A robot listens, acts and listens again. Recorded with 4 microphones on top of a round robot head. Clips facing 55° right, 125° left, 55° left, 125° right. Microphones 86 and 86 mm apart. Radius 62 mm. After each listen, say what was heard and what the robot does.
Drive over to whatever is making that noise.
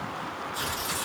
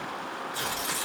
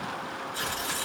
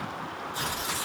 The tearing paper: 155° left. Turn 155° left.
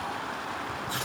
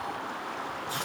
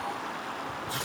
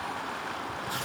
The tearing paper is now 75° left. Turn 75° left.
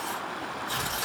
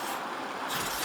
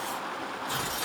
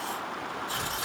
The tearing paper is now 20° left. Turn 20° left.
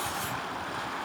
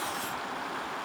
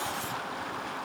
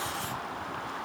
Keep listening.
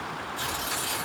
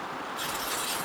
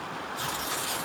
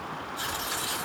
Drive 1.0 m forward.
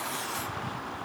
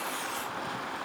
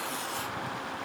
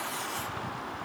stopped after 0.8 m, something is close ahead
Keep listening.
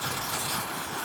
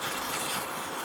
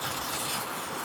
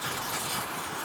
I am next to the tearing paper.